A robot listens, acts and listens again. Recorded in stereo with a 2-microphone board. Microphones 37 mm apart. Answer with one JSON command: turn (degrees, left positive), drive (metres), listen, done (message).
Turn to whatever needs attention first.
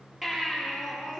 {"turn": -30}
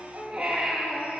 {"turn": -135}
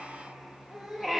{"done": "Found it: a baby crying, straight ahead, over 4 m away."}